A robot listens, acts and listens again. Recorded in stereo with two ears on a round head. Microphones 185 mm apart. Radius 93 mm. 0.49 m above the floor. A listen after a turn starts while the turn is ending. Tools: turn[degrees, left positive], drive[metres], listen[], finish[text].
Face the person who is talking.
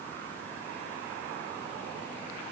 Action: listen[]
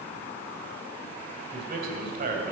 Thought: The man speaking: about 45° right or 135° right.
Action: turn[-45]
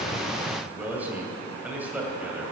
Thought: So it is at 10° right.
Action: turn[-10]
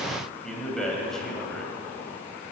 Action: finish[Found it: a man speaking, straight ahead.]